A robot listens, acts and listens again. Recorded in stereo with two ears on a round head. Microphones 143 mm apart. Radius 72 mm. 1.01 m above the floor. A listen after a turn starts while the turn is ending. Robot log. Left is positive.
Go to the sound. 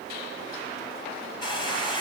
note: The hair dryer: about 30° left or 150° left.
cmd yaw +30
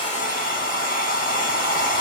note: So it is at 120° left.
cmd yaw +120
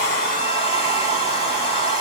note: The hair dryer is now 40° left.
cmd yaw +40
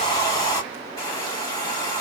note: The hair dryer is now 25° left.
cmd yaw +25
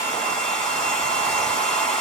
note: The hair dryer is now 10° left.
cmd yaw +10
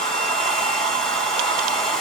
cmd fwd 1.0
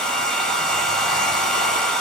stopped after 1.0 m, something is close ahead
end: Arrived at the hair dryer, straight ahead.